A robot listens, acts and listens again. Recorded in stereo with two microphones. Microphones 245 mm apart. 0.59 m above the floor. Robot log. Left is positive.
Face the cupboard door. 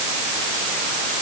cmd idle
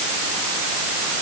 cmd idle
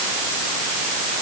end: I can't make out a cupboard door.